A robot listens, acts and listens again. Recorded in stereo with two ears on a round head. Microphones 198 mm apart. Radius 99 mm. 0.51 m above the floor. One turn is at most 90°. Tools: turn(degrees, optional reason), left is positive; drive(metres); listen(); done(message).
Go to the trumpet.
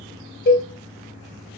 listen()
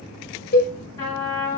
turn(degrees=20, reason="The trumpet: about 20° left or 160° left.")
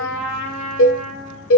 drive(metres=1.0)
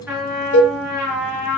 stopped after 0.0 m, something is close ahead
done("Something is in my way. I am facing the trumpet but have not reached it.")